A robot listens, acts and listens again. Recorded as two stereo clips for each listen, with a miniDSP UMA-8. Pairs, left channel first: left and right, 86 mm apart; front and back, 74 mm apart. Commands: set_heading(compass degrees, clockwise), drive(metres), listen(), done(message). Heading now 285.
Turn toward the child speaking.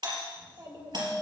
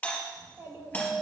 set_heading(45)
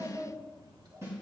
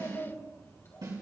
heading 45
set_heading(100)
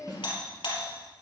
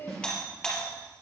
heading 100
set_heading(110)
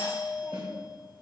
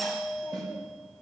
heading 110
listen()
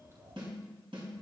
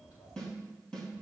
set_heading(145)
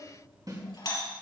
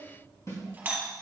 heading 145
done("Facing the child speaking, 2 to 4 m away.")